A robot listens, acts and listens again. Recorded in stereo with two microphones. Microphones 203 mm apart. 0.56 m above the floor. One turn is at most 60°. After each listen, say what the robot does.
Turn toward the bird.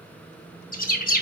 Turn 45° left.
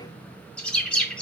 Found it: a bird, straight ahead, under 1 m away.